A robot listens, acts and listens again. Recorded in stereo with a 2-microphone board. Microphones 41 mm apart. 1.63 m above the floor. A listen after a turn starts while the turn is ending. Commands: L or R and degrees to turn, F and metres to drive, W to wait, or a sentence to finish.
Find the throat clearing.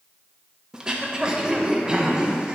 R20
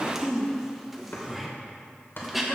Facing the throat clearing, 1 to 2 m away.